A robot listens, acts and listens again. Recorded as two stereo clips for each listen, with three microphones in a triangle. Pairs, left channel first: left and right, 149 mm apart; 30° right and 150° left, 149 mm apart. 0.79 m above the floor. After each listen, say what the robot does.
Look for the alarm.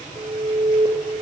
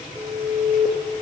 Turn 150° right.
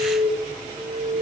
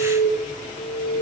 Turn 20° right.
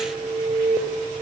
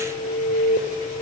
Found it: an alarm, straight ahead, 2 to 4 m away.